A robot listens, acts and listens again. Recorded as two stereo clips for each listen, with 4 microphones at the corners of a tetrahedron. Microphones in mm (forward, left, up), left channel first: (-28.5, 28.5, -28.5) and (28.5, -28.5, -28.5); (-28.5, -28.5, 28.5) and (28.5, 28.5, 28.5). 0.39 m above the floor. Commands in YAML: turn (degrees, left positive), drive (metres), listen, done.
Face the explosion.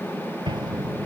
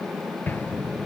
turn: -70
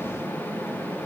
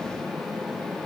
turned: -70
done: "I heard an explosion from this way, but can't make it out now."